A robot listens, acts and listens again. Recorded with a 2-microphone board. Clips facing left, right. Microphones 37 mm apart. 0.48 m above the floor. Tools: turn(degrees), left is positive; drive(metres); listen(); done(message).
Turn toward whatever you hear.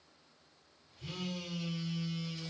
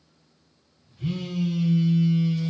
turn(degrees=-35)
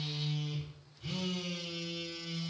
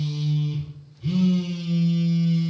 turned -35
done("Facing the phone buzzing.")